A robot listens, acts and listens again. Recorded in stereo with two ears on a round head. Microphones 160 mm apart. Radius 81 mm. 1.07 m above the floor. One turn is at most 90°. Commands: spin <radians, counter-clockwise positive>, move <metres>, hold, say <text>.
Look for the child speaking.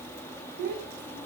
spin -0.87
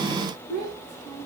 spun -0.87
say Found it: a child speaking, straight ahead, over 4 m away.